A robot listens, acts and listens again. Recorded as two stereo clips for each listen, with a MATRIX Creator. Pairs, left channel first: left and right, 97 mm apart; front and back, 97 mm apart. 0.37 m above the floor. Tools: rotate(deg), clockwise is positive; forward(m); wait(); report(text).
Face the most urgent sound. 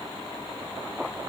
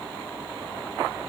wait()
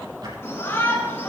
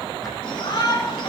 rotate(-30)
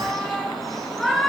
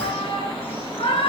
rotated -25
report("Facing the shout, over 4 m away.")